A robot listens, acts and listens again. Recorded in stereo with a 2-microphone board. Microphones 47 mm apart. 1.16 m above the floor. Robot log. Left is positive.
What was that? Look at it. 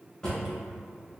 note: The drawer: about 20° left or 160° left.
cmd yaw +20
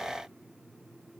cmd idle
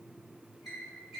end: Facing the drawer.